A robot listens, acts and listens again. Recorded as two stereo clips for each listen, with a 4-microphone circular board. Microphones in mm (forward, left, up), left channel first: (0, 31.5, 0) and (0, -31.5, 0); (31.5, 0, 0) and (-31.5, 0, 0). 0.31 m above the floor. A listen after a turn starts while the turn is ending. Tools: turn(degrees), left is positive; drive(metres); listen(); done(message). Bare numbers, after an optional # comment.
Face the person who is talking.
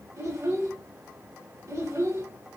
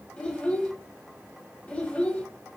# The child speaking: 60° right.
turn(-60)
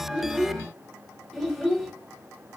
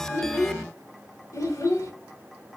done("Facing the child speaking.")